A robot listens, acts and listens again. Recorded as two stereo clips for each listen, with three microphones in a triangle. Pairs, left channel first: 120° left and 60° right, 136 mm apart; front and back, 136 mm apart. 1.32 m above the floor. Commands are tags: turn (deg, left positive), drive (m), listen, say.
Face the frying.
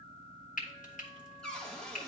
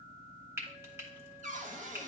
<turn deg="110"/>
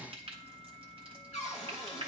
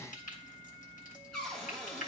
<turn deg="-10"/>
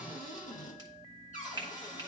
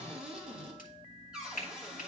<say>Found it: frying, straight ahead, 1 to 2 m away.</say>